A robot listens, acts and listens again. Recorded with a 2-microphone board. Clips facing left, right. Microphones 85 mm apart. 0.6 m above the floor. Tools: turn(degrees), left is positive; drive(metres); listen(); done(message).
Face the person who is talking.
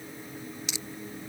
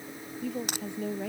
turn(degrees=-90)
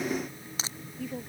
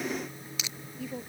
done("Facing the woman speaking.")